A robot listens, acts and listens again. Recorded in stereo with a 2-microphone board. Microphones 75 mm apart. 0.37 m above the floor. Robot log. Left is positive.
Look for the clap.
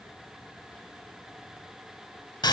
cmd idle
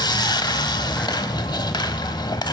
cmd idle
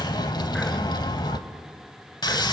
end: I can't make out a clap to turn to.